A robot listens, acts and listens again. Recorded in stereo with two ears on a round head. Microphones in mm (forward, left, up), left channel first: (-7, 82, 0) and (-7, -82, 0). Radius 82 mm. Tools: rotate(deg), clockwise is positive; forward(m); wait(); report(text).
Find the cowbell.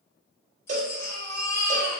rotate(45)
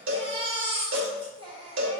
rotate(90)
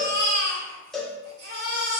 report("Facing the cowbell.")